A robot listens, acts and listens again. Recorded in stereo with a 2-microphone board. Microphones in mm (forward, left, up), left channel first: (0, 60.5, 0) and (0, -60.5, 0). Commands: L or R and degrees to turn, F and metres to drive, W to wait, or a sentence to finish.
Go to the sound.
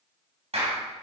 R60
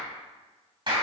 R50
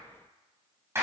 R25
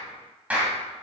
R15
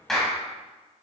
F1.0
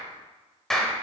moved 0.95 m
F1.0
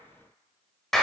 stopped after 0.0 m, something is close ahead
I am next to the clap.